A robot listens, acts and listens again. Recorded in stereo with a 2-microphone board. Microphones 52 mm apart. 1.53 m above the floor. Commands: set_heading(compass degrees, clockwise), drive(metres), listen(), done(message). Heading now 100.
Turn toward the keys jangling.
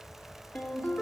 listen()
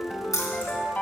set_heading(25)
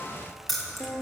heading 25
done("Facing the keys jangling.")